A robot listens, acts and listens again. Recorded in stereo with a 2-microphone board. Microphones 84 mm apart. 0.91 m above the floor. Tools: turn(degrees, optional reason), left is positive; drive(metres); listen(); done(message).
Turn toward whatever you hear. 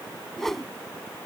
turn(degrees=30)
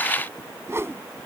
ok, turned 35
turn(degrees=-30, reason="So it is at 30° right.")
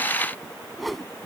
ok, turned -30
done("Facing the whoosh.")